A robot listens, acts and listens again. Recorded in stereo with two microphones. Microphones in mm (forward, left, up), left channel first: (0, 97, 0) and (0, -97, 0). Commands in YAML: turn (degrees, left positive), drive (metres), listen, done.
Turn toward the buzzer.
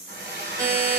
turn: -15
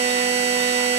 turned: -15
turn: -150
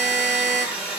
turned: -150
turn: -45
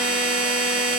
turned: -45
done: "Found it: a buzzer, straight ahead."